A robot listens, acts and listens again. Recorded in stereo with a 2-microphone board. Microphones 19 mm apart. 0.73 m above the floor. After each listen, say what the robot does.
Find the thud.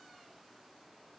Keep listening.
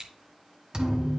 Turn 40° right.
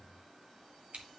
Keep listening.
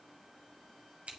I heard a thud, but can't make it out now. It was about straight ahead or 100° right.